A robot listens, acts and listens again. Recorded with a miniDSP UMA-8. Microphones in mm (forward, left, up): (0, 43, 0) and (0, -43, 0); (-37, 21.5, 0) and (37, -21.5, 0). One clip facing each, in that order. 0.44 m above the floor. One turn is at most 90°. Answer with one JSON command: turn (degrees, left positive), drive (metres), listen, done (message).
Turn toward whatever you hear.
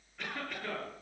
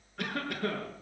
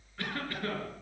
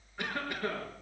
{"turn": -90}
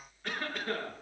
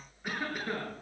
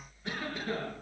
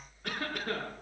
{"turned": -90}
{"turn": -10}
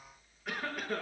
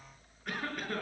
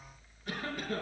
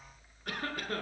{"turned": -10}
{"done": "Facing the cough, over 4 m away."}